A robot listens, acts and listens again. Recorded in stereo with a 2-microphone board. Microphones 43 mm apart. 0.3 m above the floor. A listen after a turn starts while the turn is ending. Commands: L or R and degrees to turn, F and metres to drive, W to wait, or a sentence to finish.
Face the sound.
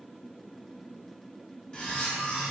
L20
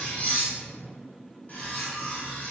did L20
L135
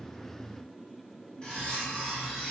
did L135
L25
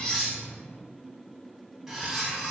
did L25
R10
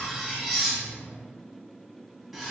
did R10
Found it: cutlery clinking, straight ahead, 1 to 2 m away.